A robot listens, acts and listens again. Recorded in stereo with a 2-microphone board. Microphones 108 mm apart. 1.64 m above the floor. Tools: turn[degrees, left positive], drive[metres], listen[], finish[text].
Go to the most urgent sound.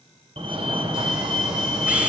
Thought: The fire alarm: about 50° right or 130° right.
Action: turn[-50]
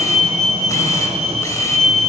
Thought: So it is at 75° right.
Action: turn[-75]
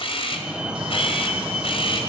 Thought: The fire alarm is now 10° right.
Action: turn[-10]
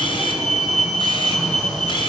Action: drive[1.0]
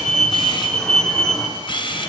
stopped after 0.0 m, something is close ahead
Action: finish[Blocked. The fire alarm is further on, straight ahead.]